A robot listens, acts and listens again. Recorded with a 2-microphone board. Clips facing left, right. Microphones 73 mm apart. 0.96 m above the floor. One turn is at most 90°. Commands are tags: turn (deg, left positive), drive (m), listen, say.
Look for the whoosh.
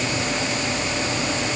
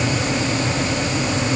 <listen/>
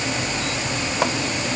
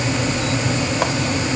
<listen/>
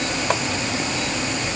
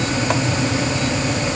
<say>I can't make out a whoosh to turn to.</say>